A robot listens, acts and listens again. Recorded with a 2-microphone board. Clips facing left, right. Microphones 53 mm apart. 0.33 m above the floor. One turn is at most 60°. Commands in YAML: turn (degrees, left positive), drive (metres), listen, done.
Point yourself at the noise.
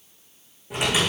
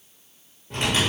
turn: 30
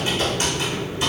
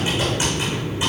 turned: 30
turn: -15
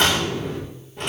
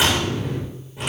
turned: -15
done: "Facing the typing on a keyboard."